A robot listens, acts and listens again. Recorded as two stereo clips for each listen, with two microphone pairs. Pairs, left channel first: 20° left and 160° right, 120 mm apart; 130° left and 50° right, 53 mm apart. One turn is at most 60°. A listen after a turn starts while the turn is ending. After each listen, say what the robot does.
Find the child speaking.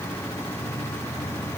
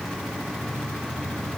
Keep listening.
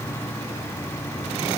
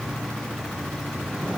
Keep listening.
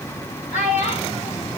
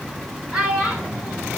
Turn 25° left.
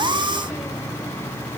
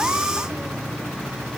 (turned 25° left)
Keep listening.
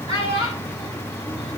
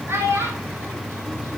Turn 20° right.
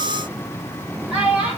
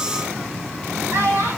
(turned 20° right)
Turn 10° right.
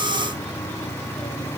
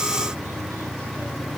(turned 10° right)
Keep listening.
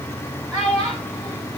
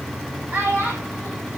Facing the child speaking, 2 to 4 m away.